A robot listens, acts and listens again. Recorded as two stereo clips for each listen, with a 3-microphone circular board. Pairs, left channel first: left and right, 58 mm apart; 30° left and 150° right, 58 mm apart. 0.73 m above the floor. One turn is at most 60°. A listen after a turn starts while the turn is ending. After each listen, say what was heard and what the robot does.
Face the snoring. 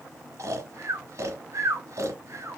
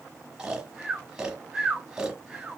The snoring: 70° right. Turn 60° right.
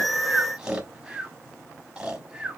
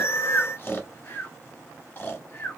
The snoring is now 15° right. Turn 15° right.
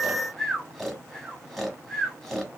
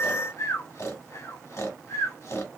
Facing the snoring.